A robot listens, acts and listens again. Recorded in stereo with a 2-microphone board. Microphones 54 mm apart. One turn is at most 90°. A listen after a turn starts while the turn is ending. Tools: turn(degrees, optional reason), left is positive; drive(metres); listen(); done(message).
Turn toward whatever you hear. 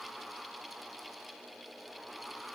listen()
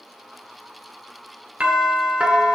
turn(degrees=-25, reason="The doorbell: about 25° right or 155° right.")
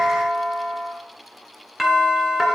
done("Facing the doorbell.")